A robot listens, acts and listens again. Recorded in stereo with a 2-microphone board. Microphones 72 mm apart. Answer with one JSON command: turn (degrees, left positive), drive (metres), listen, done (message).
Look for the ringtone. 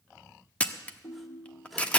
{"turn": 70}
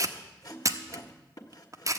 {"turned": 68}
{"done": "Facing the ringtone, 1 to 2 m away."}